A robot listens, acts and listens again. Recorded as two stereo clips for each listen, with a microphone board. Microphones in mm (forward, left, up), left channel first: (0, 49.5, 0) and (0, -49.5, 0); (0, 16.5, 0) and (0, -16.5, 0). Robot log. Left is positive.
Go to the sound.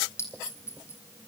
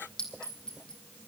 note: The clink: about 25° left or 155° left.
cmd yaw +25
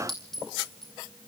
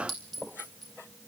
cmd fwd 1.0
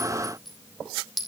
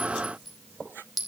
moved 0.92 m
cmd fwd 1.0
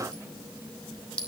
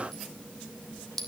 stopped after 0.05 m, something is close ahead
note: The clink is now 10° left.
cmd yaw +10
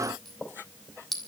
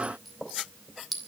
end: Something is in my way. I am facing the clink but have not reached it.